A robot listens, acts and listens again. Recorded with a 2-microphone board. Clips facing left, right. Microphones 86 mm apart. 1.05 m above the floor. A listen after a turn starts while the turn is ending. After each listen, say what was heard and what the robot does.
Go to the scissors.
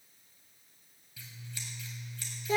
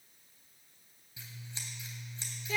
The scissors: about 25° right or 155° right. Turn 25° right.
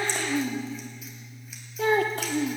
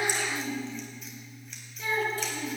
Drive 1.0 m forward.
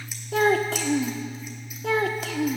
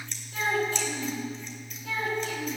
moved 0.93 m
The scissors is now 10° left. Turn 10° left.
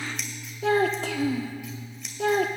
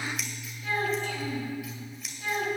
Drive 1.0 m forward.
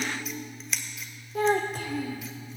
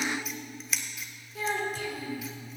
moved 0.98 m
Drive 1.0 m forward.
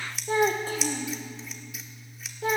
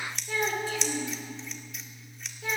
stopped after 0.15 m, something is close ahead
Arrived at the scissors, straight ahead.